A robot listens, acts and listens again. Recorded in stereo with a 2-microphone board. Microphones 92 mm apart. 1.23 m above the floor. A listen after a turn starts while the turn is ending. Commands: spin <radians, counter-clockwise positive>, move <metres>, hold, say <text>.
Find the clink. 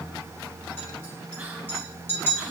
spin 0.44
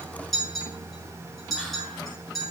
say Found it: a clink, straight ahead.